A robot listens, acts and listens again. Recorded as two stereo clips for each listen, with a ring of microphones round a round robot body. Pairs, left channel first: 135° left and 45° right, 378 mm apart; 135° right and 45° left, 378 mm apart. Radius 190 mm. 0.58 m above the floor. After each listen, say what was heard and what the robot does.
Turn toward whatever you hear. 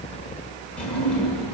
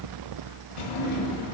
The drawer: 135° right. Turn 135° right.
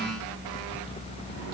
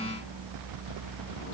Keep listening.
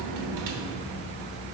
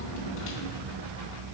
The drawer is now 75° right. Turn 75° right.
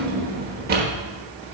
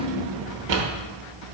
The drawer is now 25° left. Turn 25° left.
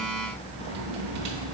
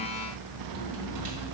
Keep listening.
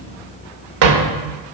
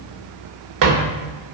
Facing the drawer, 1 to 2 m away.